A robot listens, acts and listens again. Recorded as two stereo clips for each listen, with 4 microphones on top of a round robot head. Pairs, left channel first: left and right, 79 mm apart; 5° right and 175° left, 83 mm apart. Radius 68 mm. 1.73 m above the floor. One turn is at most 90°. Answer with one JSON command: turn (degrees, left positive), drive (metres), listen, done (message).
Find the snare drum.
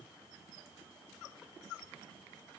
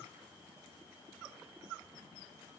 {"listen": true}
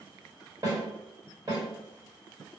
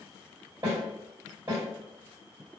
{"turn": -90}
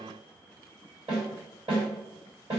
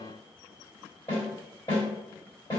{"turn": -60}
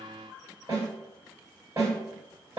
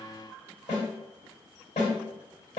{"turn": -25}
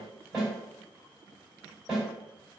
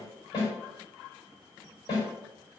{"done": "Found it: a snare drum, straight ahead, 2 to 4 m away."}